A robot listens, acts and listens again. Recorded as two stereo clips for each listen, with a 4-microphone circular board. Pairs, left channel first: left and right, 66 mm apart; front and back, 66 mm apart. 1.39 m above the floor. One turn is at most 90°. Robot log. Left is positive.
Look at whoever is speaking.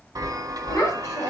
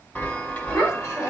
note: The child speaking: 45° left.
cmd yaw +45
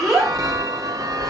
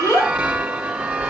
end: Found it: a child speaking, straight ahead, 2 to 4 m away.